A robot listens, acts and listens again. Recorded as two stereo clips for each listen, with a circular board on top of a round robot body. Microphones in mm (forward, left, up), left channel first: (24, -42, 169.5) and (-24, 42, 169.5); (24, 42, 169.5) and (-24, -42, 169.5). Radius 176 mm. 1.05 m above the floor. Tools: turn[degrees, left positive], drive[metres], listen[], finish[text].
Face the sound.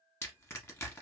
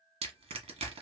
Thought: The crushing: 130° right.
Action: turn[-130]
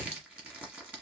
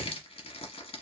Thought: The crushing is now 40° left.
Action: turn[40]
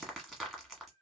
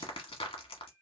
Thought: The crushing is now 30° left.
Action: turn[30]
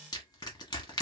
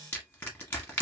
Thought: The crushing is now 10° right.
Action: turn[-10]
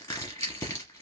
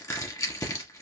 Action: finish[Facing the crushing, 1 to 2 m away.]